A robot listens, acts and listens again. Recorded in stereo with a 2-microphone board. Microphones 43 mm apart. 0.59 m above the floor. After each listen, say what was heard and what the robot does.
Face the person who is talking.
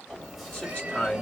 The man speaking: about 25° left or 155° left. Turn 25° left.
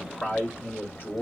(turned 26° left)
So it is at 125° left. Turn 125° left.
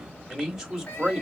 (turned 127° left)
Facing the man speaking.